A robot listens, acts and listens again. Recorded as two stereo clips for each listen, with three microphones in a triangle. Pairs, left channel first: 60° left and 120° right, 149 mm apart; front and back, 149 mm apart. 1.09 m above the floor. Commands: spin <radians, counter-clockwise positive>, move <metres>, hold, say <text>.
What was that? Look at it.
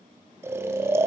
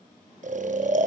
spin 2.97
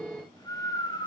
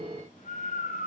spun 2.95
say Found it: snoring, straight ahead, under 1 m away.